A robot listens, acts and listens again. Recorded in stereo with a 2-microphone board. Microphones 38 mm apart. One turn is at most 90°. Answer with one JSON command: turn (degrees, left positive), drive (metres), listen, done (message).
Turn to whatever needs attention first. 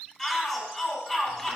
{"turn": 30}
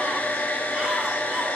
{"listen": true}
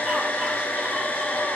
{"listen": true}
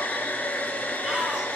{"done": "I heard a shout, but can't make it out now. It was about 15° right or 135° left."}